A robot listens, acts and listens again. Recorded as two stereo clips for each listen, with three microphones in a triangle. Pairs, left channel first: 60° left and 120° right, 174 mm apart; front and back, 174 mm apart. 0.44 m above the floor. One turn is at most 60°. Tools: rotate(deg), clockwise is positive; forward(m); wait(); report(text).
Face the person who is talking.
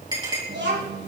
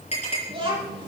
rotate(60)
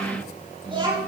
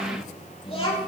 rotate(55)
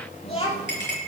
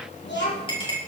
report("Found it: a child speaking, straight ahead, over 4 m away.")